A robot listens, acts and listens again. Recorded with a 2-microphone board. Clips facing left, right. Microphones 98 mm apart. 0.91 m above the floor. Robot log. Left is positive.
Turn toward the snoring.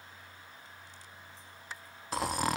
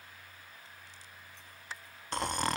cmd yaw +30
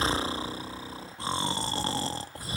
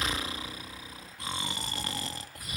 note: So it is at 145° left.
cmd yaw +145
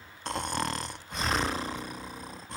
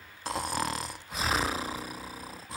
end: Facing the snoring, under 1 m away.